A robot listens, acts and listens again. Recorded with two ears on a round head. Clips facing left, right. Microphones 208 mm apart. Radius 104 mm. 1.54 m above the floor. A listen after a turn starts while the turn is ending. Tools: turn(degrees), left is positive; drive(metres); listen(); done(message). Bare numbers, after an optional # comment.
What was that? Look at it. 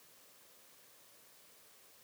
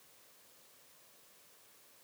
listen()
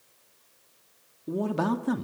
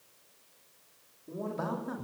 turn(90)
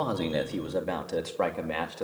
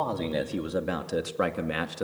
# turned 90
# So it is at 20° right.
turn(-20)
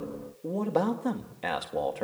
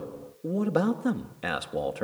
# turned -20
# The man speaking is now 10° right.
turn(-10)
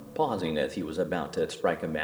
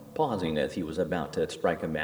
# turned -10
done("Found it: a man speaking, straight ahead, 2 to 4 m away.")